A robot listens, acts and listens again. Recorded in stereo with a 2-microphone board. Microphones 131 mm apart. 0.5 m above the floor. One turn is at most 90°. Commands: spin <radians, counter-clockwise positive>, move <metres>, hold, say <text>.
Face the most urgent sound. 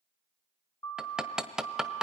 spin 0.44
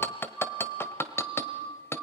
say Facing the siren.